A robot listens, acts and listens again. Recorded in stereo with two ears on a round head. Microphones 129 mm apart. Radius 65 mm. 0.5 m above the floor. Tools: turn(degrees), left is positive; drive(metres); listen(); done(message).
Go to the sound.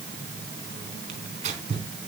turn(degrees=-50)
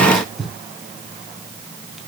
drive(metres=1.0)
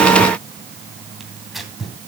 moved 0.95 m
drive(metres=1.0)
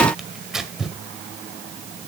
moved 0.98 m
drive(metres=1.0)
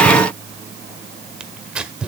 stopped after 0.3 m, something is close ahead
turn(degrees=-10)
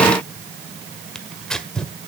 done("Arrived at the tearing paper, straight ahead.")